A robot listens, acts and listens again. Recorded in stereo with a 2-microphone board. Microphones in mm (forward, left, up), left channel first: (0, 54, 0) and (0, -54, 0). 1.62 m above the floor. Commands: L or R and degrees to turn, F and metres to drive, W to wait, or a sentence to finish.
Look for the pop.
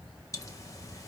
L35
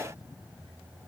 W
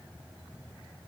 I heard a pop, but can't make it out now. It was about straight ahead or 110° left.